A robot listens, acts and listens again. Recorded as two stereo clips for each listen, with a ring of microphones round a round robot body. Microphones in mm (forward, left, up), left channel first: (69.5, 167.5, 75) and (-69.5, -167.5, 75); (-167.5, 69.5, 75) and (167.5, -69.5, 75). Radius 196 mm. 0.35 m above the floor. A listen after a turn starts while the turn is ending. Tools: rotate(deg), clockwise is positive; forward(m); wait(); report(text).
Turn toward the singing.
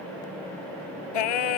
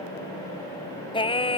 rotate(-80)
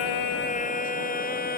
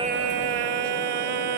report("Found it: singing, straight ahead.")